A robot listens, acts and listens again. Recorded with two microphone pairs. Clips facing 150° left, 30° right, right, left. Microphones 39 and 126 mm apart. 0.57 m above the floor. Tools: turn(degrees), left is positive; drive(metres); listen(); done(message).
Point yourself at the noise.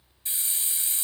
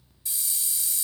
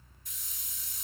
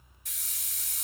turn(degrees=95)
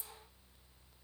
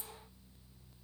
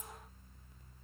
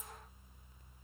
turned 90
listen()
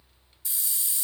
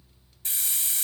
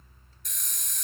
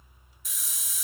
done("Facing the hiss.")